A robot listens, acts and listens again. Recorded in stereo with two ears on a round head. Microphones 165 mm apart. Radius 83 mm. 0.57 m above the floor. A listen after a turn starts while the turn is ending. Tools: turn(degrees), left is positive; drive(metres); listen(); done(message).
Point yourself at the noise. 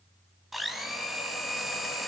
turn(degrees=30)
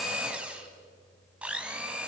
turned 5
turn(degrees=-30)
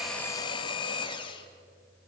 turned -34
turn(degrees=25)
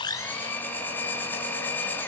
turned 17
turn(degrees=10)
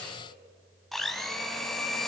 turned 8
done("Found it: a blender, straight ahead.")